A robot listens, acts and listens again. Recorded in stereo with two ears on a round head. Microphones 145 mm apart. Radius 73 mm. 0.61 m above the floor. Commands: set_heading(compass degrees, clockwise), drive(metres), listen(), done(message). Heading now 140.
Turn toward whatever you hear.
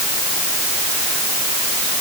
listen()
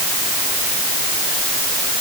listen()
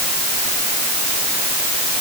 done("I can't make out anything to turn to.")